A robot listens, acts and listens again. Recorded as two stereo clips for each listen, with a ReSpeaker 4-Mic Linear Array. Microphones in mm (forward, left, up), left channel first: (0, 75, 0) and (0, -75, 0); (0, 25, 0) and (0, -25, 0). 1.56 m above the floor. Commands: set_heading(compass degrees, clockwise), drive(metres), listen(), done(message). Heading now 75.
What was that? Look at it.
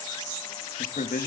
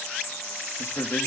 set_heading(5)
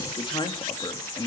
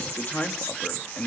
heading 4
set_heading(339)
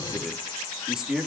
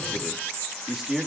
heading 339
done("Found it: a man speaking, straight ahead.")